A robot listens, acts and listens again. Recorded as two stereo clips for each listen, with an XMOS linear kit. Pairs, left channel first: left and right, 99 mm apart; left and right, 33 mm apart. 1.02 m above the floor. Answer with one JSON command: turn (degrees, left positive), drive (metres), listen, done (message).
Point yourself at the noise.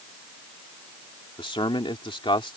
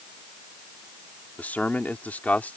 {"turn": 65}
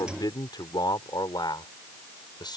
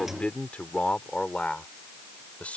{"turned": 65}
{"turn": 50}
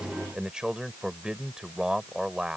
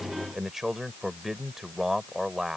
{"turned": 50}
{"turn": -10}
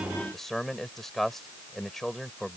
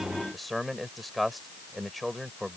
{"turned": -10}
{"done": "Found it: a man speaking, straight ahead."}